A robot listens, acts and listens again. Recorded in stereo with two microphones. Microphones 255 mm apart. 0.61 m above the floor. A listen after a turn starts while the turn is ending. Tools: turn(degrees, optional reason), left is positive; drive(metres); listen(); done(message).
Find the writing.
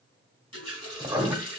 turn(degrees=-30)
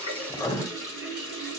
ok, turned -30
turn(degrees=15, reason="So it is at 15° left.")
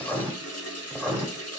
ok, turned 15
done("Found it: writing, straight ahead.")